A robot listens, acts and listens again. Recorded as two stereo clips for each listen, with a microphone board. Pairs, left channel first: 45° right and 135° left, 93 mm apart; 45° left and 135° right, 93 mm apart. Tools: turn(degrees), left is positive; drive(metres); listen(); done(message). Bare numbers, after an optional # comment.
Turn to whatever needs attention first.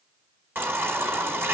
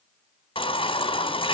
# The baby crying: 70° left.
turn(70)
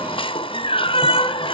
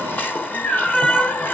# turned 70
# The baby crying is now 25° right.
turn(-25)
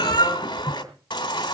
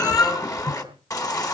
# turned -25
done("Found it: a baby crying, straight ahead, 2 to 4 m away.")